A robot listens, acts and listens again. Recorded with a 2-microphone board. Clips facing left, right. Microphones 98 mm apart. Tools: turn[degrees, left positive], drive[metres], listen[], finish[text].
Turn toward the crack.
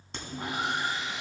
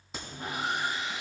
Action: turn[-30]
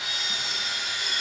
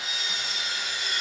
Action: listen[]
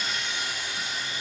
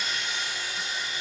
Action: finish[I heard a crack, but can't make it out now. It was about 25° left or 145° right.]